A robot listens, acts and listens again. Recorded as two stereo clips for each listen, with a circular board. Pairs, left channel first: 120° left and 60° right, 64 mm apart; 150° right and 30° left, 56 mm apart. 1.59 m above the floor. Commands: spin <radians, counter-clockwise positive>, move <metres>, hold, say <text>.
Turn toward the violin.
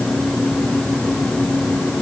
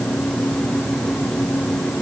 hold
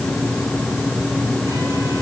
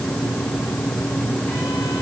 hold
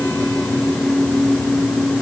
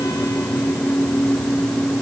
say I can't make out a violin to turn to.